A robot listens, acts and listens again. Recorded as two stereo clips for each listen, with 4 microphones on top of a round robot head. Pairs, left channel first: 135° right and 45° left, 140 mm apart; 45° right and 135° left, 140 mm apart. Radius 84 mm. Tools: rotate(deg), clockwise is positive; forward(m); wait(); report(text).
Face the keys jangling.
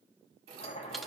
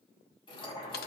rotate(-10)
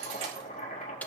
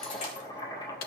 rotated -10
report("Found it: keys jangling, straight ahead.")